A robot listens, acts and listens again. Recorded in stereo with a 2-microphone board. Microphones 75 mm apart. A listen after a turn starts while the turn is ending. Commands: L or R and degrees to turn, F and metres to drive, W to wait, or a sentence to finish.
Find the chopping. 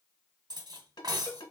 W
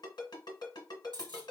W
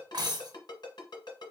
I can't make out chopping, only a ringtone and cutlery clinking.